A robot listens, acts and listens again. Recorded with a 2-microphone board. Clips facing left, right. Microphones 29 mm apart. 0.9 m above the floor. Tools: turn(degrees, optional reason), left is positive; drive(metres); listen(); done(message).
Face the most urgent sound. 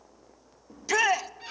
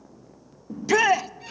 turn(degrees=-30)
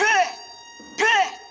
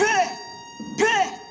turn(degrees=20, reason="So it is at 20° left.")
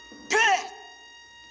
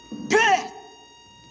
done("Facing the shout.")